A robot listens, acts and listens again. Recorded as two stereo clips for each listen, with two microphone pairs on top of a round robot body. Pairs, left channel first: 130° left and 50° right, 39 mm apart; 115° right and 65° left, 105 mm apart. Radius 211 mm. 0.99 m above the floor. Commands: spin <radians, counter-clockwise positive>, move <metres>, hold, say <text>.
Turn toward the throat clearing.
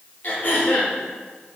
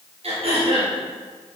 spin 1.48
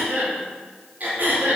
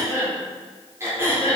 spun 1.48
say Facing the throat clearing.